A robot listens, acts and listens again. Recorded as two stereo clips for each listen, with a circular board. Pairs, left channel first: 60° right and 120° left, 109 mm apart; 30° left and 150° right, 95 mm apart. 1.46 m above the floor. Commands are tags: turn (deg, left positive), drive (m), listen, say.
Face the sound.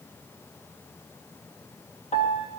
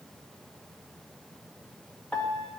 <turn deg="-50"/>
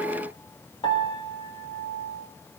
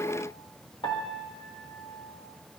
<turn deg="-10"/>
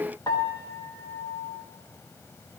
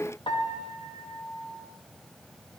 <say>Found it: a piano, straight ahead, 1 to 2 m away.</say>